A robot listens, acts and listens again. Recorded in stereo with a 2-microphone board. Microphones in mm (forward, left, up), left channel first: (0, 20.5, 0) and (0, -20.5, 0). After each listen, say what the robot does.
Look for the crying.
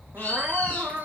Turn 60° right.
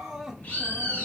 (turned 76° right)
Turn 15° right.
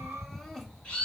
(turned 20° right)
Facing the crying.